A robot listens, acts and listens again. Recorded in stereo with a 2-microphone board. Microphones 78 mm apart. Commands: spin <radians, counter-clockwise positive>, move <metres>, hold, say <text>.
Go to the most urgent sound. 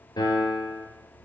hold
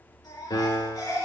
spin 1.05
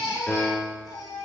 spin 1.05
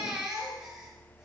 spin -0.17
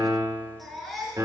move 1.0
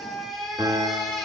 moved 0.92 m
move 1.0
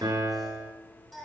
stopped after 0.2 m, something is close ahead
say Blocked. The baby crying is further on, straight ahead.